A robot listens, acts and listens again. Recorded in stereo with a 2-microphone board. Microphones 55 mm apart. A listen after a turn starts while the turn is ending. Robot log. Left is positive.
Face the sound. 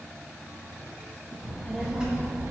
note: The child speaking: about 20° right or 160° right.
cmd yaw -20
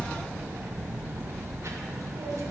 note: So it is at 110° right.
cmd yaw -110
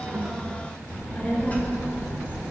note: The child speaking is now 35° left.
cmd yaw +35
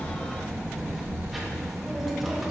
end: Facing the child speaking.